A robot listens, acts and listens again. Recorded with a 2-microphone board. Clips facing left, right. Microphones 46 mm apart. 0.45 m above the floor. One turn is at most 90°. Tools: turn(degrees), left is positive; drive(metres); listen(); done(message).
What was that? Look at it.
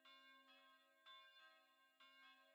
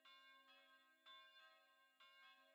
listen()
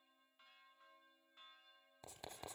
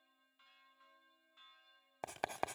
turn(degrees=-90)
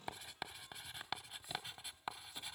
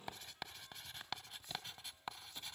turn(degrees=10)
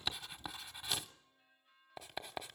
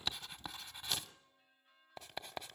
done("Found it: writing, straight ahead.")